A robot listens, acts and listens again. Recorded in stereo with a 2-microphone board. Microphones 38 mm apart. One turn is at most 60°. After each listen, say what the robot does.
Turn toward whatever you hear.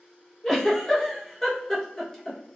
Turn 30° left.
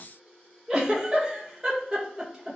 Turn 20° right.
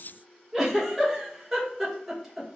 Turn 10° right.
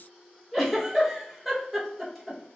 Facing the giggle.